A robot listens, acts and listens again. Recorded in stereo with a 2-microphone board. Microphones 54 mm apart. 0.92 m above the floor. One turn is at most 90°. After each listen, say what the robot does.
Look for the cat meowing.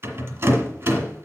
Keep listening.
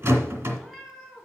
Turn 30° right.
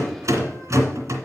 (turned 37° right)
Keep listening.
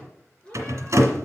Turn 20° left.
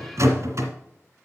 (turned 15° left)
Keep listening.
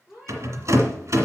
Facing the cat meowing, 2 to 4 m away.